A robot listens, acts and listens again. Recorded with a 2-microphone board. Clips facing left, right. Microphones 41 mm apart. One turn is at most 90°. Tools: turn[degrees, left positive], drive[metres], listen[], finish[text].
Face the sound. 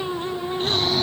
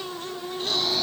Thought: The snoring: about 40° left or 140° left.
Action: turn[40]
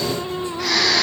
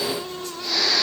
Thought: So it is at 100° left.
Action: turn[90]
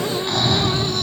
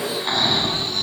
Thought: The snoring is now 25° right.
Action: turn[-25]
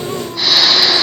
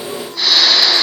Action: finish[Facing the snoring.]